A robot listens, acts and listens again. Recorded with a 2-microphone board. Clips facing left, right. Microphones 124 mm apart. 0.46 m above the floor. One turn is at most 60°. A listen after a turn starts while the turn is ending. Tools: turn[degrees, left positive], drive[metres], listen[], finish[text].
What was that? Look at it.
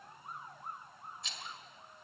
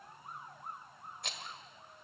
Thought: The rattle: about 60° right or 120° right.
Action: turn[-60]
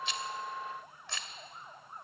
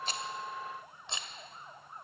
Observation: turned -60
Thought: So it is at 25° right.
Action: turn[-25]
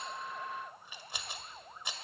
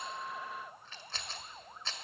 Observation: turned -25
Thought: The rattle is now 15° left.
Action: turn[15]
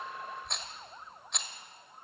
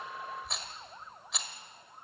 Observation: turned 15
Action: finish[Found it: a rattle, straight ahead, 1 to 2 m away.]